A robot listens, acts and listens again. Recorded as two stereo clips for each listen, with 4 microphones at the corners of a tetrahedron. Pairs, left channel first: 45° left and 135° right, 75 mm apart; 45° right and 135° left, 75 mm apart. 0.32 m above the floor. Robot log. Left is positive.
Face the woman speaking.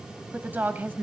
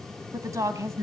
note: The woman speaking: 170° left.
cmd yaw +170
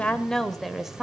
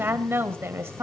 note: The woman speaking is now 150° left.
cmd yaw +150
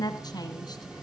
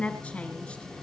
note: The woman speaking is now 20° left.
cmd yaw +20
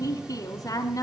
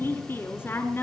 end: Found it: a woman speaking, straight ahead, 2 to 4 m away.